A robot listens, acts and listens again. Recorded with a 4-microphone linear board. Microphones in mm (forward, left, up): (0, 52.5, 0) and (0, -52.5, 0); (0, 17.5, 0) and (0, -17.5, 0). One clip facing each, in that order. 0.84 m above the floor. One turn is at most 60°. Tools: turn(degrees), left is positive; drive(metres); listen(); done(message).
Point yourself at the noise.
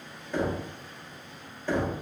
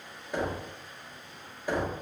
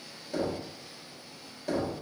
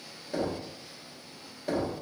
turn(degrees=-30)
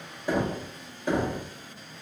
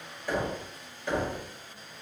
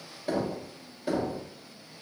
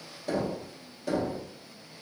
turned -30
turn(degrees=20)
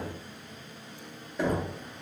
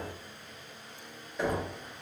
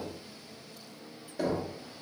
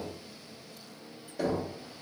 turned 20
done("Facing the knocking.")